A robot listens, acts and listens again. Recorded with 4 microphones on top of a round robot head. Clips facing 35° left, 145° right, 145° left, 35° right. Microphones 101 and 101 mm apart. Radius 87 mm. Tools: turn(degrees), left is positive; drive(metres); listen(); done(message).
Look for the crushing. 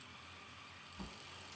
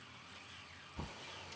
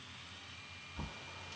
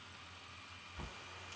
listen()
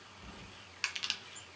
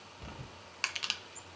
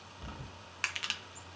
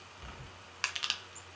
turn(degrees=-105)
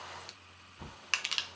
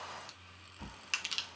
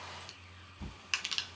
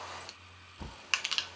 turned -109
done("Facing the crushing, under 1 m away.")